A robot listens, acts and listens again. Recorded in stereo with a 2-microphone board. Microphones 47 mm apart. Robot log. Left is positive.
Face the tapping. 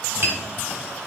note: The tapping: about 55° right or 125° right.
cmd yaw -55
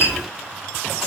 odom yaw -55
note: So it is at 50° right.
cmd yaw -50
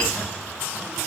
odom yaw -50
cmd idle
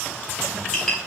note: The tapping is now 10° left.
cmd yaw +10
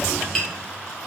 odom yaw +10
end: Found it: tapping, straight ahead.